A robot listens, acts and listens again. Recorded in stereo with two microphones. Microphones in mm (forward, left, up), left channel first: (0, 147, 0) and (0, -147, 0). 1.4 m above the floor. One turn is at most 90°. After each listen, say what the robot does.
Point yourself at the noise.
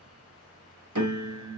Turn 90° right.
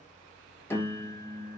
Turn 10° left.
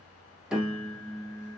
Found it: a piano, straight ahead.